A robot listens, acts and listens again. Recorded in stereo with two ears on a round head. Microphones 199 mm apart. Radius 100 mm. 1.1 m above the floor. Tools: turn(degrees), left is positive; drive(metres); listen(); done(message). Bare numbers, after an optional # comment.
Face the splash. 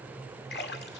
# The splash: about 50° left or 130° left.
turn(50)
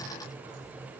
listen()
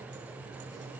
done("I heard a splash, but can't make it out now. It was about straight ahead or 80° left.")